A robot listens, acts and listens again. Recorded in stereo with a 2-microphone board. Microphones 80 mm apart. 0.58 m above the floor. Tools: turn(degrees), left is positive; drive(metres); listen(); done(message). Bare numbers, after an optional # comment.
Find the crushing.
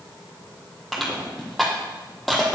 turn(30)
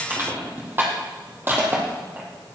# So it is at 30° right.
turn(-30)
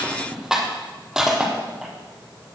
# The crushing is now 10° right.
turn(-10)
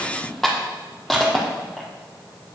done("Facing the crushing.")